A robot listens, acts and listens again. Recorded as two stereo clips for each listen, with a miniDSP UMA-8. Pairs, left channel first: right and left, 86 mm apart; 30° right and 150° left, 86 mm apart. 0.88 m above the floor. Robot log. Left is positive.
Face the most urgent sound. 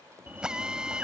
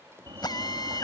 note: The fire alarm: 160° left.
cmd yaw +160
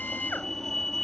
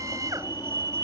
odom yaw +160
end: Facing the fire alarm.